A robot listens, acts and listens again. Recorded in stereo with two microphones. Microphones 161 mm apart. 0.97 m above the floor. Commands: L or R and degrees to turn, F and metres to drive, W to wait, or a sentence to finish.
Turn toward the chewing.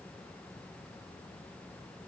W
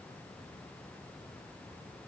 W
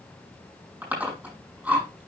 R30
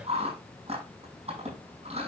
R140
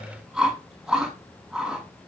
Facing the chewing.